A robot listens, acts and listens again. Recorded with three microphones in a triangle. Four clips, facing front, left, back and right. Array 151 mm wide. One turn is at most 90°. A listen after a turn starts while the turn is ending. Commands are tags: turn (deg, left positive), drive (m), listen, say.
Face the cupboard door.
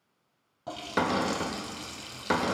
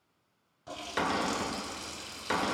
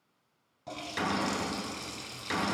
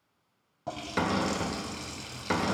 <say>Found it: a cupboard door, straight ahead.</say>